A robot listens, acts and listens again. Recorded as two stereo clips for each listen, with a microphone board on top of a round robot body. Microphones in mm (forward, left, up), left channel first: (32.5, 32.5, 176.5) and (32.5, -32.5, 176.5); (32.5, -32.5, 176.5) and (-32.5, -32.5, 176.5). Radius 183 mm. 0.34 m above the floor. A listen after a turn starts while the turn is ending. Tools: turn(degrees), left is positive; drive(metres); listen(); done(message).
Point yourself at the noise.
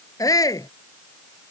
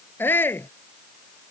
turn(degrees=60)
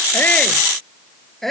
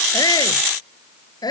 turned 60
done("Facing the shout.")